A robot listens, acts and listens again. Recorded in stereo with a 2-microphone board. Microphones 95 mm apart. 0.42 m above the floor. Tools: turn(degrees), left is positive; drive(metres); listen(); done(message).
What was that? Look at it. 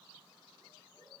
listen()
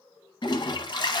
turn(degrees=50)
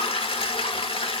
turn(degrees=80)
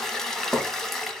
done("Facing the toilet flushing.")